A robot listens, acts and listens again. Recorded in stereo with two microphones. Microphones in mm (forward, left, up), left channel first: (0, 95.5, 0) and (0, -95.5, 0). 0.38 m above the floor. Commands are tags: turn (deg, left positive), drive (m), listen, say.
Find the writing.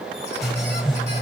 <turn deg="30"/>
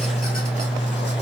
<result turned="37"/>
<turn deg="140"/>
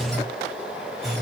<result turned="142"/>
<say>Facing the writing.</say>